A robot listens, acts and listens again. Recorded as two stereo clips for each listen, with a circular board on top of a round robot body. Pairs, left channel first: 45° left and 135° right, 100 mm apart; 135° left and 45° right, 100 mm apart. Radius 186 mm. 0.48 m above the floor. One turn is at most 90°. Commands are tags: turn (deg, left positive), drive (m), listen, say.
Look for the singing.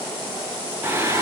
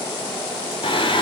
<turn deg="90"/>
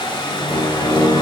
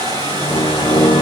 <turn deg="90"/>
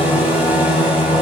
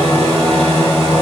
<turn deg="55"/>
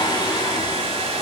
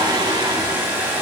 <say>Facing the singing, 2 to 4 m away.</say>